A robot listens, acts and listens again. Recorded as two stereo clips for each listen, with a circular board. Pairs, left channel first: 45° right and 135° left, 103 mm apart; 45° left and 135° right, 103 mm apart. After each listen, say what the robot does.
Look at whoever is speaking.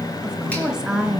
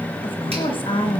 Turn 55° left.
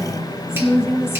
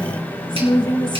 Turn 15° left.
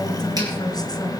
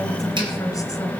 Keep listening.
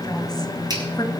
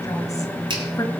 Found it: a woman speaking, straight ahead, 2 to 4 m away.